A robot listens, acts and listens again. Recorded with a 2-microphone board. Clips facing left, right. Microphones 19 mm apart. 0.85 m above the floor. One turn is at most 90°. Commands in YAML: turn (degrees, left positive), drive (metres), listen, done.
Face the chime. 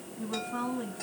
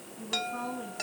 turn: -55
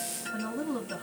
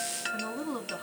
turn: -70
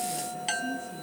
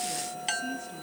turn: -10
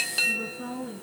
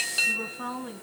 done: "Facing the chime, under 1 m away."